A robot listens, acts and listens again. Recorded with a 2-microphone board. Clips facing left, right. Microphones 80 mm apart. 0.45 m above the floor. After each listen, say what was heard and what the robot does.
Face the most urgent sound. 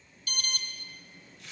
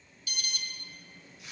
The alarm: about 50° left or 130° left. Turn 50° left.
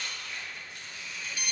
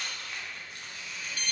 So it is at 15° left. Turn 15° left.
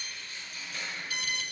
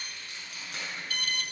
Found it: an alarm, straight ahead.